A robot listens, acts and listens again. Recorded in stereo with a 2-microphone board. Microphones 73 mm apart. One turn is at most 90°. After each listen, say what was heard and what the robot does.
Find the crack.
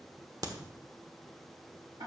The crack: about 55° right or 125° right. Turn 55° right.
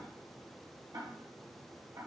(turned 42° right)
Keep listening.
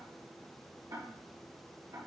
I heard a crack, but can't make it out now. It was about 15° right or 85° right.